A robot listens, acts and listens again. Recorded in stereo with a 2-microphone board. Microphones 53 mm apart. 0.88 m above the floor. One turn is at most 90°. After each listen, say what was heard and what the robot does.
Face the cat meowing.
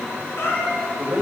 The cat meowing: about 45° left or 135° left. Turn 45° left.
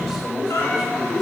So it is at 90° left. Turn 90° left.
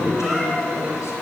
Keep listening.
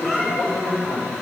Facing the cat meowing, over 4 m away.